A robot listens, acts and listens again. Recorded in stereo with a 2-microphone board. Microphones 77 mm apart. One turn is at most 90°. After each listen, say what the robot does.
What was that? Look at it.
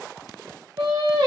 Turn 90° right.
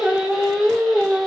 Found it: singing, straight ahead.